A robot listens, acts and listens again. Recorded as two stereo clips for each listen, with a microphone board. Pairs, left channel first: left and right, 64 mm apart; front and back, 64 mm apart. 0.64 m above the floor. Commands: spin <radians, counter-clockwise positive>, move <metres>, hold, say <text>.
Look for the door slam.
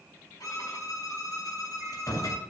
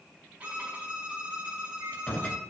spin 1.22
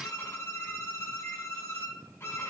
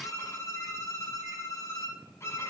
say I heard a door slam from this way, but can't make it out now.